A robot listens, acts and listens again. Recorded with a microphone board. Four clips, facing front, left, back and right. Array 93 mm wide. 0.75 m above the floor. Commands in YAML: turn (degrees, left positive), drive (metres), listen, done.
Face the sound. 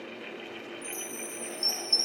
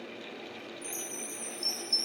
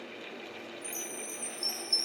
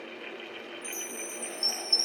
turn: -15
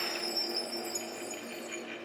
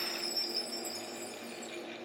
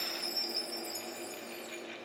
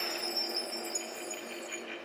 done: "Found it: a chime, straight ahead."